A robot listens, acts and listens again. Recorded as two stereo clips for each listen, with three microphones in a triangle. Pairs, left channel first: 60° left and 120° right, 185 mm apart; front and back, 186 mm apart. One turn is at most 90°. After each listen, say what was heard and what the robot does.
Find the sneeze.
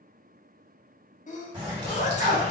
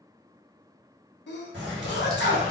The sneeze: 15° left. Turn 15° left.
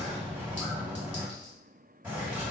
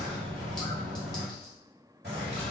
Facing where the sneeze came from. I can't hear it now.